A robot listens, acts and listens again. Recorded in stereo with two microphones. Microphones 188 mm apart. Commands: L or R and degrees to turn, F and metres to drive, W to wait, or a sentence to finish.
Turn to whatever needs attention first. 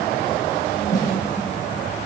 W
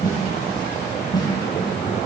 W
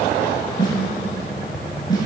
I can't make out anything urgent, only a snare drum.